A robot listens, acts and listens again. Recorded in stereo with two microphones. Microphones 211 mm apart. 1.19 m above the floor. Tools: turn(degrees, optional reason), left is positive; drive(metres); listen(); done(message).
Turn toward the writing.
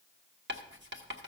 turn(degrees=-60, reason="The writing: about 60° right or 120° right.")
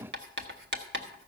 turn(degrees=-60, reason="So it is at 60° right.")
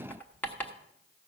turn(degrees=10, reason="The writing is now 10° left.")
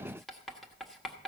done("Found it: writing, straight ahead.")